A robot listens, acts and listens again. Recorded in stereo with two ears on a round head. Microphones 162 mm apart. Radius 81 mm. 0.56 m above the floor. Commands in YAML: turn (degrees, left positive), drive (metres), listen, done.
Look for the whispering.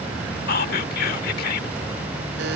turn: 55
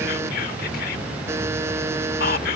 turn: 60
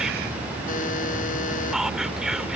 done: "Facing the whispering."